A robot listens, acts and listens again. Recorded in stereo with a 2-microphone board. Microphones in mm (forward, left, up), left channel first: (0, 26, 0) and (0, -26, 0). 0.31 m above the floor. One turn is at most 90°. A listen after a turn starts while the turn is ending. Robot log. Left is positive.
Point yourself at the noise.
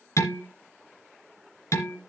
note: The dishes clattering: about 70° left or 110° left.
cmd yaw +70
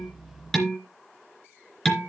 end: Found it: dishes clattering, straight ahead, 2 to 4 m away.